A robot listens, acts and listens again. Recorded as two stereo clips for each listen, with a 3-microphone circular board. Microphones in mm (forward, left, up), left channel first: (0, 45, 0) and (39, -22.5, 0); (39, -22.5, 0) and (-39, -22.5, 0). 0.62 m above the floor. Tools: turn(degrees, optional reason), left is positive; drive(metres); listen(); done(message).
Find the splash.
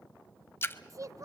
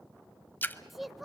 turn(degrees=65, reason="The splash: 65° left.")
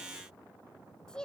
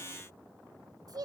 done("Facing where the splash came from. I can't hear it now.")